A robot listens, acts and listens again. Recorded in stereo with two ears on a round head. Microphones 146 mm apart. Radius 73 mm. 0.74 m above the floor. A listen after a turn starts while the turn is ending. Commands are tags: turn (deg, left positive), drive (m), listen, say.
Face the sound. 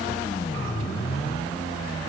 <listen/>
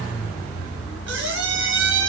<turn deg="-90"/>
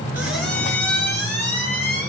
<turn deg="10"/>
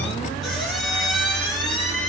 <say>Facing the squeak, 2 to 4 m away.</say>